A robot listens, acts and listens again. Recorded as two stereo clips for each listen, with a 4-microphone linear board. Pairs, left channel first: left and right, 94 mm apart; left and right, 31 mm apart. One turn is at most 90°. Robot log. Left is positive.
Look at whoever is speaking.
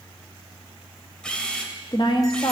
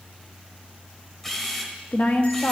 note: The woman speaking: about 55° left or 125° left.
cmd yaw +55
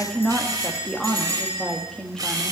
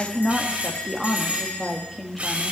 end: Found it: a woman speaking, straight ahead, 1 to 2 m away.